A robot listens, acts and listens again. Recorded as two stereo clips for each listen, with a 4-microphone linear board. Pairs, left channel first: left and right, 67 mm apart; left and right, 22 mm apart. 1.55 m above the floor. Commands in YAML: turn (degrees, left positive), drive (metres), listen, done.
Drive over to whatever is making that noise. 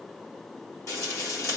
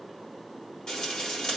turn: 45
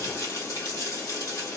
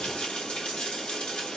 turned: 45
turn: 85
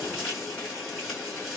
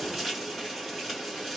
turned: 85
drive: 1.0
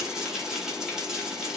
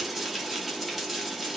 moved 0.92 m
turn: -10
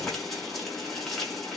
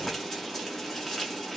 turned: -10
drive: 1.0
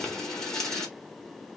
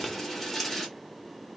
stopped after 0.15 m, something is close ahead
turn: 10
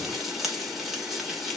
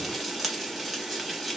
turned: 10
done: "Arrived at the frying, straight ahead."